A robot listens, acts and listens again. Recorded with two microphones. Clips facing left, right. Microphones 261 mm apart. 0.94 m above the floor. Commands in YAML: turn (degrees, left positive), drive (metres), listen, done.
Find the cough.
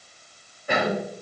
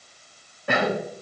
turn: -75
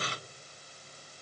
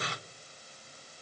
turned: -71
listen: true
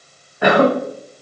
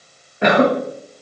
turn: -25
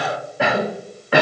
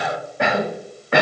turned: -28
done: "Found it: a cough, straight ahead, under 1 m away."